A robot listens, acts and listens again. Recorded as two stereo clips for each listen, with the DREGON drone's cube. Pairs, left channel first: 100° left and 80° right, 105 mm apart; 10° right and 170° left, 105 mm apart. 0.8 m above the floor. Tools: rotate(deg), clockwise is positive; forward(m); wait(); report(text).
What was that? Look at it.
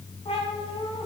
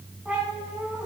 rotate(-95)
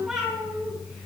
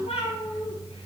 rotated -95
report("Facing the cat meowing, over 4 m away.")